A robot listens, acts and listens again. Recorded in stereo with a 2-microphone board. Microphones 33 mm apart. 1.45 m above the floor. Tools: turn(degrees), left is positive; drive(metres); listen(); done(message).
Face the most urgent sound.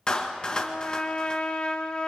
listen()
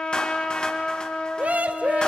turn(degrees=-50)
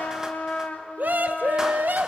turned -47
turn(degrees=-80)
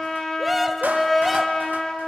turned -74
done("Found it: a scream, straight ahead.")